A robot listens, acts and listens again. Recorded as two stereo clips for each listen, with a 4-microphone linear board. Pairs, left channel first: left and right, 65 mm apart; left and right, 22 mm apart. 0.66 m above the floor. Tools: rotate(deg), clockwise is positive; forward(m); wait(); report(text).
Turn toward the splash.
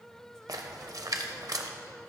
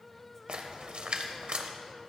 rotate(65)
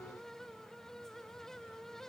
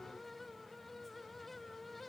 wait()
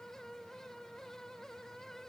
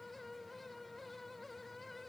report("I heard a splash, but can't make it out now. It was about straight ahead or 50° right.")